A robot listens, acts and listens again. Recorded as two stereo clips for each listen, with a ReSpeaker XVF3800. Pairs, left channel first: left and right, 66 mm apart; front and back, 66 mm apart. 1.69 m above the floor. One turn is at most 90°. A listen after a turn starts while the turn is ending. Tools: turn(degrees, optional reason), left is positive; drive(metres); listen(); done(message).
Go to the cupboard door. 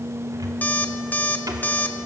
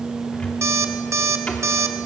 turn(degrees=-75, reason="The cupboard door: 75° right.")
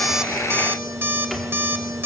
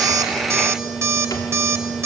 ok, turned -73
listen()
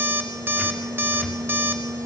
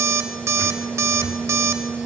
listen()
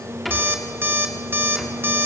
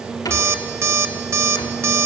drive(metres=1.0)
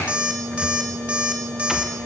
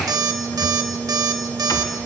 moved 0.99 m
listen()
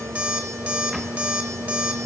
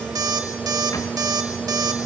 listen()
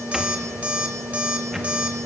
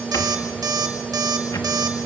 done("I heard a cupboard door from this way, but can't make it out now. I did not reach it.")